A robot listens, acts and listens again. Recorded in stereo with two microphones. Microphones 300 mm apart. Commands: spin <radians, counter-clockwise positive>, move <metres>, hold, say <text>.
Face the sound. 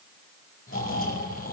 spin 0.79
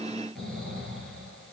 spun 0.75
say Facing the snoring, over 4 m away.